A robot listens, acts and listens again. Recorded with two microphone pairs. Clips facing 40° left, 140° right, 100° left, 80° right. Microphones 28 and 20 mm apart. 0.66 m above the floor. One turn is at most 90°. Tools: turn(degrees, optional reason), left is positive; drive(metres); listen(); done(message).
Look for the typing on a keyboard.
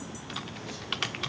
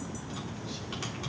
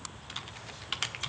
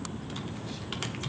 turn(degrees=30, reason="The typing on a keyboard: 30° left.")
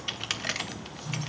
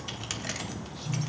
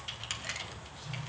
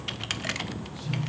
turn(degrees=-15, reason="The typing on a keyboard is now 15° right.")
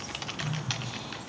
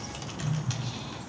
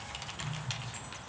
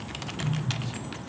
listen()
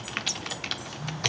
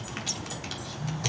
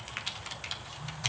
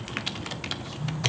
done("Found it: typing on a keyboard, straight ahead.")